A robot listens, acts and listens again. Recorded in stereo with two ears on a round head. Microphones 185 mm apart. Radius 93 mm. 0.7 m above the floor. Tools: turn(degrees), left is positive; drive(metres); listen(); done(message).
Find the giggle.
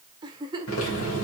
turn(degrees=-20)
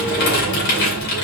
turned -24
listen()
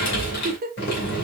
turn(degrees=-135)
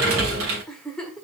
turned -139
done("Facing the giggle.")